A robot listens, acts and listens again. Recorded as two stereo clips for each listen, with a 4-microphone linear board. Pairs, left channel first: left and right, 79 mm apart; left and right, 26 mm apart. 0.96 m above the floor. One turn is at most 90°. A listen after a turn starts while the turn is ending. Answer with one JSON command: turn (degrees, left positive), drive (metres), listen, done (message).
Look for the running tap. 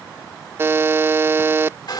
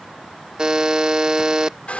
{"listen": true}
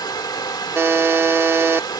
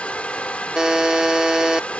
{"listen": true}
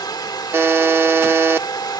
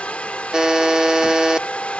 {"done": "I can't make out a running tap, only a hair dryer and a buzzer."}